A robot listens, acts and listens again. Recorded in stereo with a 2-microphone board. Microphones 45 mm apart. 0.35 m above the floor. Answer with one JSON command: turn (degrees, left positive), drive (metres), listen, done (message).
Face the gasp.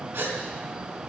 {"turn": -70}
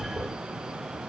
{"listen": true}
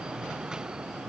{"done": "I heard a gasp, but can't make it out now. It was about straight ahead or 40° right."}